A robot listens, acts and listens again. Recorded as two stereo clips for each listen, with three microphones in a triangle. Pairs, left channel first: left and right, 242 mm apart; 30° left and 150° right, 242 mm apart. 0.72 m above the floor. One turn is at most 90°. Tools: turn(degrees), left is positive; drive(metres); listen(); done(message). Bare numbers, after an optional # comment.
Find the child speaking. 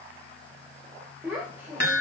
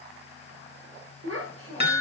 # The child speaking: 175° right.
turn(-90)
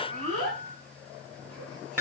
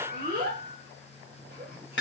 # The child speaking is now 100° right.
turn(-90)
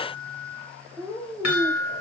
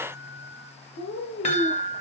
done("Found it: a child speaking, straight ahead.")